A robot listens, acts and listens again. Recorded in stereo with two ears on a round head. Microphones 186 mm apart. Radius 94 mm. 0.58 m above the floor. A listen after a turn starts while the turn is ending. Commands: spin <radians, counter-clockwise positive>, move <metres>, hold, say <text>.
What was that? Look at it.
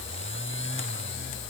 hold
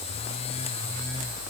hold
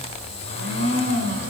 spin -1.13
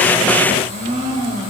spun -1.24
spin -0.70
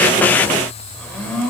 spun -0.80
say Facing the blender.